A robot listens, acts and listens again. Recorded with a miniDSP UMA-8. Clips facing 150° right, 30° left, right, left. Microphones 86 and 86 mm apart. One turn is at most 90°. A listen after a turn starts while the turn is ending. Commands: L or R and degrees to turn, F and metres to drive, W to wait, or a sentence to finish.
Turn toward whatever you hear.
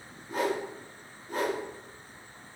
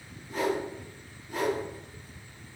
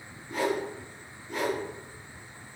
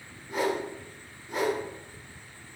L90
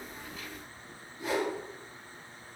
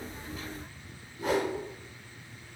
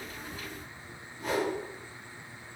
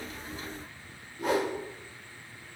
L70
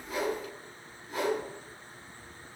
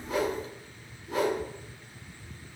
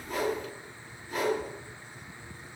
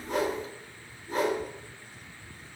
L35
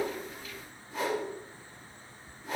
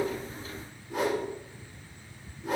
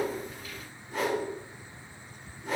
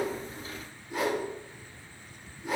Facing the whoosh, 1 to 2 m away.